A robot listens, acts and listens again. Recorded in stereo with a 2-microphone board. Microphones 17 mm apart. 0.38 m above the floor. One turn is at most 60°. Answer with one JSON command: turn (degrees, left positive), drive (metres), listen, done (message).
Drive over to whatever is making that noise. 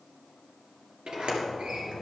{"turn": -60}
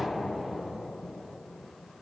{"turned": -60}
{"turn": -15}
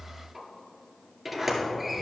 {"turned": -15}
{"drive": 1.0}
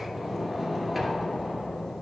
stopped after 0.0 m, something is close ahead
{"done": "Blocked. The sliding door is further on, straight ahead."}